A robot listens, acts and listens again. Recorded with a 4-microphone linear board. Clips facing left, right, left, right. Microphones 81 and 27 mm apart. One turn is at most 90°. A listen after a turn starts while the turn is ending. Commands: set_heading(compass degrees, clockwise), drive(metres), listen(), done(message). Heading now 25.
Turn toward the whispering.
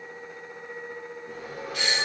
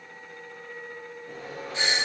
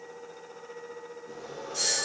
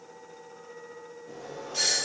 listen()
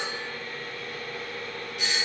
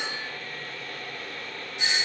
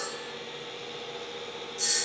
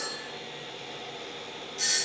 listen()
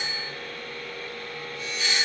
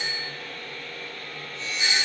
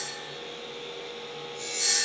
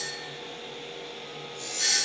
done("I can't make out whispering to turn to.")